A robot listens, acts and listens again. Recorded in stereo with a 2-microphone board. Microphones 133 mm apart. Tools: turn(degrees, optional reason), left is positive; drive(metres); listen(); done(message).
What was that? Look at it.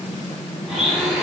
turn(degrees=30)
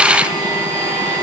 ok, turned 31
turn(degrees=-35, reason="So it is at 35° right.")
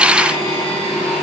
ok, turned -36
done("Facing the blender.")